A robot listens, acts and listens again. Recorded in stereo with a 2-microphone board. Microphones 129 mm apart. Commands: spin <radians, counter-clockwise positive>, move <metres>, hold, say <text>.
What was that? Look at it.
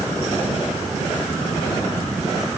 hold
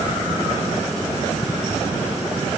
hold
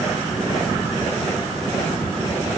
say I can't make out anything.